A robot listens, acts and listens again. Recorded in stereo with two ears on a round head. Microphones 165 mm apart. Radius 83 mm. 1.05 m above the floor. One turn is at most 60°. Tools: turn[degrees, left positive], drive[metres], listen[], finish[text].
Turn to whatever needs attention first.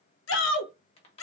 Action: turn[60]
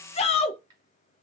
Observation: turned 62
Thought: So it is at 35° left.
Action: turn[35]
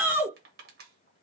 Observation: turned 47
Thought: The shout is now 10° right.
Action: turn[-10]
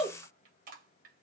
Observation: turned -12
Action: finish[Facing the shout.]